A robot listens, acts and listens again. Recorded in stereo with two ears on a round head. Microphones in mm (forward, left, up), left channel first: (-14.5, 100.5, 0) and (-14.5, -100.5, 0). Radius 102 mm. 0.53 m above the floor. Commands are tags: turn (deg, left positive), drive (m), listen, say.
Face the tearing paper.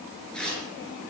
<turn deg="30"/>
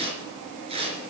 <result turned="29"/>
<turn deg="-25"/>
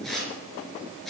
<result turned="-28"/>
<say>Found it: tearing paper, straight ahead, 2 to 4 m away.</say>